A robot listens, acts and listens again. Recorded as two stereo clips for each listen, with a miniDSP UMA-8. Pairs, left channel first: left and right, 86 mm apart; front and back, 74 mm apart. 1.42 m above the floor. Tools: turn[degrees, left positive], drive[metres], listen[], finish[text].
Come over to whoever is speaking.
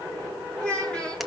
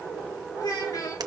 Thought: The child speaking: 15° left.
Action: turn[15]
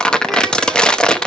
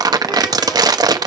Action: listen[]
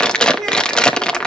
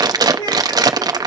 Action: drive[1.0]
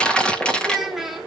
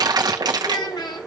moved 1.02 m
Action: drive[1.0]
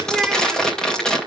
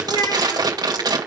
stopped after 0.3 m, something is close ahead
Action: finish[I am next to the child speaking.]